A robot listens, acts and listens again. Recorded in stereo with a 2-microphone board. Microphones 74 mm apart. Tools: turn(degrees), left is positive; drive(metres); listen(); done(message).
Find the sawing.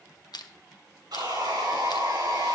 turn(degrees=-75)
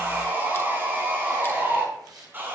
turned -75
turn(degrees=-30)
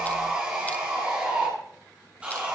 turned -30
turn(degrees=-20)
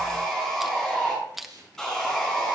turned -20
done("Found it: sawing, straight ahead, over 4 m away.")